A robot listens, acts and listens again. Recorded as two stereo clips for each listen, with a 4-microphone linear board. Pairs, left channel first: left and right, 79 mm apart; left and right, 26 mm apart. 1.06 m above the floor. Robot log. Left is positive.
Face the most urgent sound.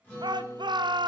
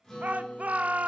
note: The shout: about 70° right or 110° right.
cmd yaw -70
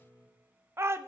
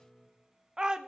note: So it is at 35° right.
cmd yaw -35
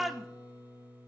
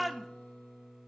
end: Found it: a shout, straight ahead, 1 to 2 m away.